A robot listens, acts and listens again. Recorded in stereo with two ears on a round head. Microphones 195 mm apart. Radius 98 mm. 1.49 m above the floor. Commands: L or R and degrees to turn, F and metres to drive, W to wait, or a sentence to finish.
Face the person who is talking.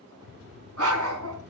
R55
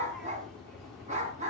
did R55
Facing the child speaking, 2 to 4 m away.